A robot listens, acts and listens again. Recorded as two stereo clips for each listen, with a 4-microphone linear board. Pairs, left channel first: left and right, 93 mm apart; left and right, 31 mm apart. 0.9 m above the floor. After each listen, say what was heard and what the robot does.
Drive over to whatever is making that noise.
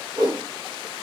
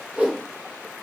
The whoosh: about 45° right or 135° right. Turn 45° right.
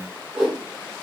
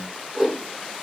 Drive 1.0 m forward.
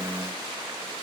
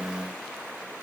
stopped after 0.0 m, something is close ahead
Keep listening.
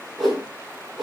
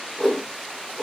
Blocked. The whoosh is further on, straight ahead.